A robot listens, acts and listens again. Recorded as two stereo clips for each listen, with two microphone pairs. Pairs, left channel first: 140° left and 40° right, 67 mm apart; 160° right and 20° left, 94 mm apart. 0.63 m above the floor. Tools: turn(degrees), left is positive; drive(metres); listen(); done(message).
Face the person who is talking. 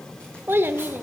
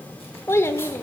turn(degrees=-100)
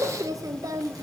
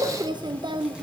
turn(degrees=-15)
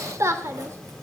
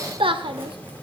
done("Facing the child speaking, 1 to 2 m away.")